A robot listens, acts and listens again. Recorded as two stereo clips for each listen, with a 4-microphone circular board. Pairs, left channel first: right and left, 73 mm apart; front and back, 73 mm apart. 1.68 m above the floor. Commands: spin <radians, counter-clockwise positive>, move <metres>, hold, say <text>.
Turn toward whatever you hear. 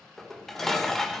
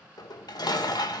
say Found it: dishes clattering, straight ahead.